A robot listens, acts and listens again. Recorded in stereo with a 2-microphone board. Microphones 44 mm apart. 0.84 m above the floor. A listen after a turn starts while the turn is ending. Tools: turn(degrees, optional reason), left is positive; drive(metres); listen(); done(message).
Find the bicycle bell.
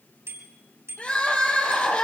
turn(degrees=-90)
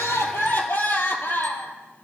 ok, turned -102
turn(degrees=10, reason="Nothing new. It was at 10° left.")
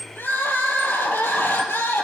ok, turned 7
listen()
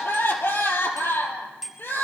done("Facing the bicycle bell.")